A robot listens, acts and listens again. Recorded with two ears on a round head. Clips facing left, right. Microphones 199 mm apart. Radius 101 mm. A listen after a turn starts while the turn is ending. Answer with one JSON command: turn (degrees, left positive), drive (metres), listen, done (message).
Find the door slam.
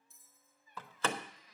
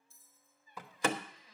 {"turn": -30}
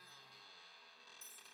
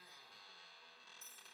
{"listen": true}
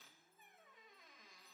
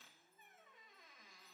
{"done": "I heard a door slam, but can't make it out now. It was about 20° left or 140° right."}